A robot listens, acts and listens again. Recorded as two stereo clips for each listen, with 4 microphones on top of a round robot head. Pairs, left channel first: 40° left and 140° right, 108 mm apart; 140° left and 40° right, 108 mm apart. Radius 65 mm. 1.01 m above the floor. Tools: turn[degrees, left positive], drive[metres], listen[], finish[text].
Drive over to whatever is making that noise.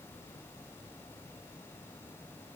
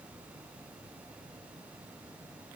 Action: listen[]
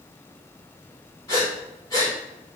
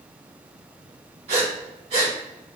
Thought: The breathing: 20° right.
Action: turn[-20]
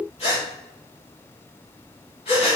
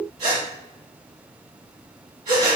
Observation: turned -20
Action: drive[1.0]
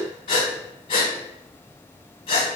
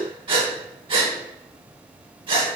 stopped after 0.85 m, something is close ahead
Action: finish[Arrived at the breathing, straight ahead.]